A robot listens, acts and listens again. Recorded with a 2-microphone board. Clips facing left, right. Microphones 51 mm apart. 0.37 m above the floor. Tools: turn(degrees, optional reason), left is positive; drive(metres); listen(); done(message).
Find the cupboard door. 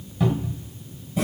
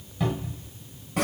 turn(degrees=30)
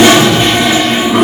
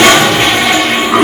listen()
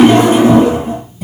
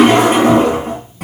listen()
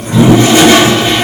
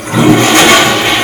done("I heard a cupboard door, but can't make it out now. It was about 25° right or 145° left.")